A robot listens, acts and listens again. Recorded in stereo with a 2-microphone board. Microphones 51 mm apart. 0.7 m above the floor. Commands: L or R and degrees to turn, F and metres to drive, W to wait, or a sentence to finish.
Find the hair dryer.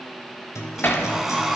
R30
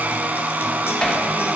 R140
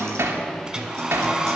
R10
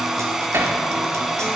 Found it: a hair dryer, straight ahead, 1 to 2 m away.